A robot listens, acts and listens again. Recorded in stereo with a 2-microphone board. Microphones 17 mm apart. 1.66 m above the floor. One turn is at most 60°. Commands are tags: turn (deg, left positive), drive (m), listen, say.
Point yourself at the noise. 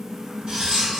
<turn deg="-55"/>
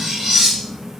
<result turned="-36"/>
<turn deg="-60"/>
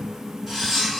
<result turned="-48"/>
<turn deg="-25"/>
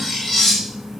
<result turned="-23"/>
<say>Facing the cutlery clinking, 1 to 2 m away.</say>